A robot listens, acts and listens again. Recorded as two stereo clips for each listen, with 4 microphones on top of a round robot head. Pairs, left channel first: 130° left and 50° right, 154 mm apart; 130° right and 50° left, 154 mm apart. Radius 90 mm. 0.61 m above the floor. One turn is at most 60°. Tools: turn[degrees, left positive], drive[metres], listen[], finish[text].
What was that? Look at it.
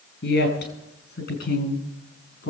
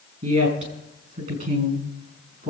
Thought: The woman speaking: 95° left.
Action: turn[60]
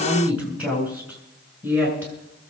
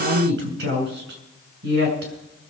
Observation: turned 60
Thought: The woman speaking is now 25° left.
Action: turn[25]
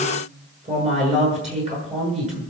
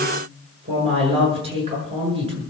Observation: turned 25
Action: finish[Facing the woman speaking.]